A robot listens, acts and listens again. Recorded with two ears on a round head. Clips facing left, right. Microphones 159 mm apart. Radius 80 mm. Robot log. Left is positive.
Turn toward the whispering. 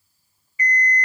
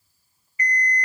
cmd idle
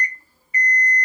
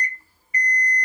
cmd idle
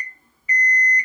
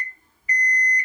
end: I can't make out whispering, only an alarm clock.